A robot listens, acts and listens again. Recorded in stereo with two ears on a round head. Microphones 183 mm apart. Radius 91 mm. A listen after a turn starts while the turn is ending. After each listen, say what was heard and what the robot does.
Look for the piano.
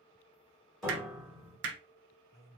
Turn 30° left.
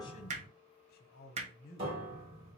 So it is at 30° right. Turn 30° right.
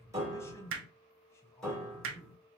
Found it: a piano, straight ahead, 2 to 4 m away.